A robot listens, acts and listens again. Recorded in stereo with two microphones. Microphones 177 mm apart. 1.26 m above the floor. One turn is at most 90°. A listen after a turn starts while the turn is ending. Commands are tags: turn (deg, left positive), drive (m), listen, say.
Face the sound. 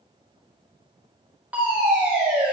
<turn deg="-30"/>
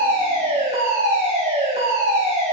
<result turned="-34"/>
<turn deg="-90"/>
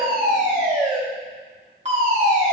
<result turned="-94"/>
<turn deg="-45"/>
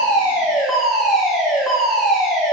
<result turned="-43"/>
<say>Facing the fire alarm.</say>